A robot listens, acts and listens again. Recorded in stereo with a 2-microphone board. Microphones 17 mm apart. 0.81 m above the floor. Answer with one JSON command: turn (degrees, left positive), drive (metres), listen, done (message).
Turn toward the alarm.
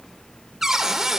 {"listen": true}
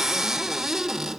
{"listen": true}
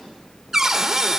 {"done": "I can't make out an alarm to turn to."}